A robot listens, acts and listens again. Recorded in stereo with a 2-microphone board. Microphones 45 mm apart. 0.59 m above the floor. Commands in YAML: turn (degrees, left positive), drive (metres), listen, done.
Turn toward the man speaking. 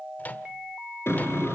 listen: true
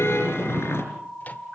listen: true
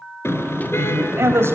turn: -90
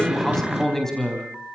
done: "Found it: a man speaking, straight ahead."